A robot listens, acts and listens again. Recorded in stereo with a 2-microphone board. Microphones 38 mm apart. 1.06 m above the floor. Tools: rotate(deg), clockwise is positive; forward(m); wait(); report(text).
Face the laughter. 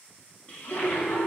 rotate(-60)
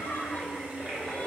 rotate(-70)
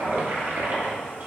wait()
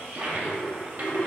rotate(-30)
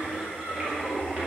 rotate(10)
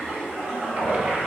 report("Facing the laughter, 2 to 4 m away.")